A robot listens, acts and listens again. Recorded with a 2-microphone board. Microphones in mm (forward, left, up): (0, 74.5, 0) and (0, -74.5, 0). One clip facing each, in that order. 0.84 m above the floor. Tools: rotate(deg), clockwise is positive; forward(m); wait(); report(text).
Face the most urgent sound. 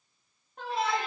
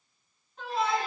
rotate(-60)
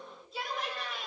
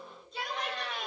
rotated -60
report("Found it: a shout, straight ahead, 2 to 4 m away.")